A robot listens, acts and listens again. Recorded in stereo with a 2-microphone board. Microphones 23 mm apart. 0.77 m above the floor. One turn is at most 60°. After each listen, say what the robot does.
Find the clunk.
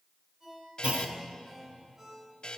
Turn 60° right.
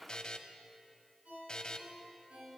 Keep listening.
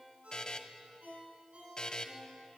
I heard a clunk, but can't make it out now. It was about 10° right or 50° right.